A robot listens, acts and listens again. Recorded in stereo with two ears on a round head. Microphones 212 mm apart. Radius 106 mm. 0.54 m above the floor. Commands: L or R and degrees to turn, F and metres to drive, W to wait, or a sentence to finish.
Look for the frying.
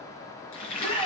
L60
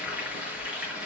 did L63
Found it: frying, straight ahead.